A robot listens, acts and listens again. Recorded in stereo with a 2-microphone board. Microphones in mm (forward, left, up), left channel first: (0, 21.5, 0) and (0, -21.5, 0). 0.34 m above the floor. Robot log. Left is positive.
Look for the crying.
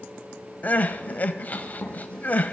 note: The crying: about 40° left or 140° left.
cmd yaw +40
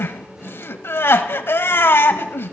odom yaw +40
note: So it is at 95° left.
cmd yaw +95
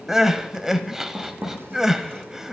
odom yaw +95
note: The crying is now 10° right.
cmd yaw -10
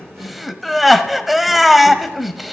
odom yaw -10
end: Facing the crying, under 1 m away.